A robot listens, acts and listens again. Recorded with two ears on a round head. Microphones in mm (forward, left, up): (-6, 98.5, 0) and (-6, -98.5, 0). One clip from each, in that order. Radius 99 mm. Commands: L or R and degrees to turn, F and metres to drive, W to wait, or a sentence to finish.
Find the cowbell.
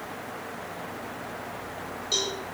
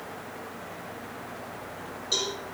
L30
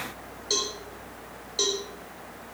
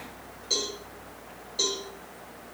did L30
L150
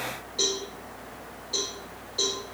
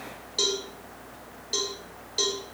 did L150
R50
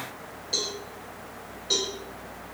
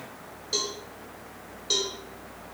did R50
R20
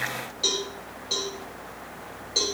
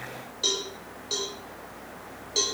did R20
Found it: a cowbell, straight ahead, over 4 m away.